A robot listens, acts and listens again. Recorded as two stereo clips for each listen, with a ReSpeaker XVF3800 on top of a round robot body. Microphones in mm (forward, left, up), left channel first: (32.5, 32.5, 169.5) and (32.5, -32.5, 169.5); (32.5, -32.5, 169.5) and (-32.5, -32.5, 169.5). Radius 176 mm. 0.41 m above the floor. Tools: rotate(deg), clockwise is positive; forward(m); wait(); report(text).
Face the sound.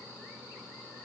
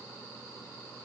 wait()
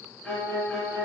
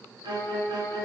rotate(-170)
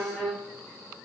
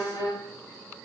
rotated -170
report("Facing the violin, 2 to 4 m away.")